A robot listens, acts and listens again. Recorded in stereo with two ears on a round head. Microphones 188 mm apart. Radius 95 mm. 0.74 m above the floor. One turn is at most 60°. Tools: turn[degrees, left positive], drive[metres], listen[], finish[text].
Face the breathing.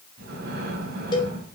Thought: The breathing: about 50° right or 130° right.
Action: turn[-50]
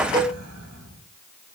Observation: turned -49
Thought: So it is at 80° right.
Action: turn[-60]
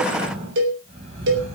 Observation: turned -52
Thought: The breathing is now 30° right.
Action: turn[-30]
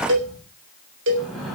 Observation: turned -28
Action: finish[Facing the breathing, 2 to 4 m away.]